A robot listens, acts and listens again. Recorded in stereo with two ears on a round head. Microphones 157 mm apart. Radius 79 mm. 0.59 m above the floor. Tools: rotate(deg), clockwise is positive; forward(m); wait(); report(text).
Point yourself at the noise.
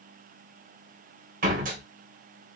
rotate(45)
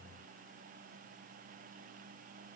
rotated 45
wait()
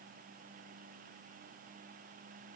report("I heard a door slam, but can't make it out now. It was about straight ahead or 90° right.")